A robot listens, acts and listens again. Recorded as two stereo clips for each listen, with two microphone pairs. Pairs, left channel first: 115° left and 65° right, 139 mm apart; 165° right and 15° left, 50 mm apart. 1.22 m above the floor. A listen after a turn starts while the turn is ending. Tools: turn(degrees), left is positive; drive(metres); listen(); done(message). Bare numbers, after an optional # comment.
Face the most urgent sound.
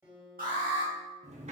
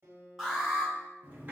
# The alarm: 65° right.
turn(-65)
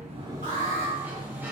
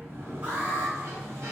# The alarm is now 25° right.
turn(-25)
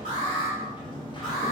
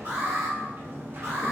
# The alarm is now 25° left.
turn(25)
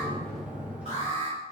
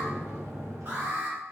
# The alarm is now 20° right.
turn(-20)
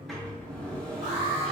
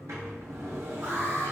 done("Found it: an alarm, straight ahead, 1 to 2 m away.")